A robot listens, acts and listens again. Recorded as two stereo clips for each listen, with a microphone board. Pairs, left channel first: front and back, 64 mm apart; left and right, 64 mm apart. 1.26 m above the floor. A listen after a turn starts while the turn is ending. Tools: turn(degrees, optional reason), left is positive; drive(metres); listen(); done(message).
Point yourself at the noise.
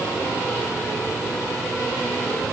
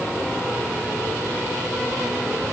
listen()
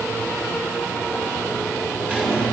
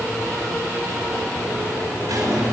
turn(degrees=-110, reason="The squeak: 110° right.")
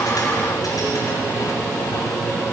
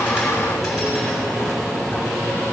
listen()
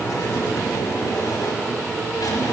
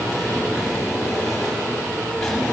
done("Found it: a squeak, straight ahead, over 4 m away.")